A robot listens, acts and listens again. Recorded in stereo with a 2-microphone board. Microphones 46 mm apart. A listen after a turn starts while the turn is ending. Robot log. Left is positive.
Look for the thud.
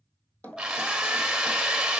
note: The thud: about 30° left or 150° left.
cmd yaw +30
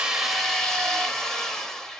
cmd idle
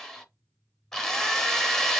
end: I heard a thud, but can't make it out now. It was about straight ahead or 120° left.